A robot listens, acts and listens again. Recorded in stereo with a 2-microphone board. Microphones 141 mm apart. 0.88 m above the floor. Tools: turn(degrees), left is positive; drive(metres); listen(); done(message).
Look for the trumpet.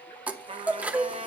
turn(degrees=-50)
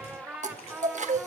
turn(degrees=-10)
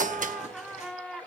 done("Facing the trumpet.")